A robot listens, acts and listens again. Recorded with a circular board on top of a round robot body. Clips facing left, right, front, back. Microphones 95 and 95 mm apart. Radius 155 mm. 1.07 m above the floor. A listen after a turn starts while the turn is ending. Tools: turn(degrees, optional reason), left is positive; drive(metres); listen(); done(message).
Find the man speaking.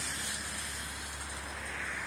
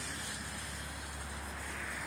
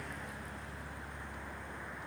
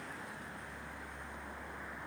listen()
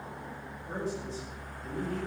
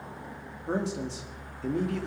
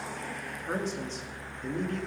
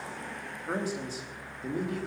turn(degrees=-95, reason="The man speaking: 95° right.")
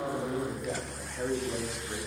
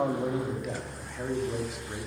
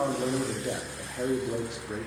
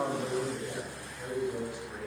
done("Found it: a man speaking, straight ahead.")